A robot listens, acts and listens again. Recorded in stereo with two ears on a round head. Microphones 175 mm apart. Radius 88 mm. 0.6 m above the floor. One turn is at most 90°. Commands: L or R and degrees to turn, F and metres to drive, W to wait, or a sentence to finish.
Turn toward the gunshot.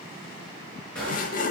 L30
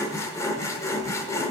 W
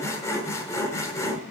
I heard a gunshot, but can't make it out now. It was about 25° right or 145° left.